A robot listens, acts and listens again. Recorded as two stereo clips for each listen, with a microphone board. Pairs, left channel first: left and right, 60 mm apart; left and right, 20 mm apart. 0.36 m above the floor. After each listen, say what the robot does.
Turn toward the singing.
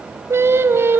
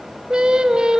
Turn 45° right.
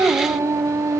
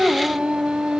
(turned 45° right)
Turn 115° right.
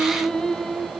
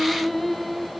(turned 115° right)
Found it: singing, straight ahead, 2 to 4 m away.